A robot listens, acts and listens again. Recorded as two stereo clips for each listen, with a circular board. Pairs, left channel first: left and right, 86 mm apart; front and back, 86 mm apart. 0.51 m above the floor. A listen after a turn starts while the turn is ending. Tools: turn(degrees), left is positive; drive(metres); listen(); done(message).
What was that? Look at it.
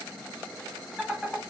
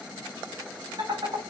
turn(degrees=-175)
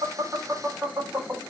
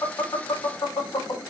turn(degrees=-30)
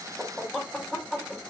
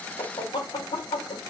done("Found it: laughter, straight ahead.")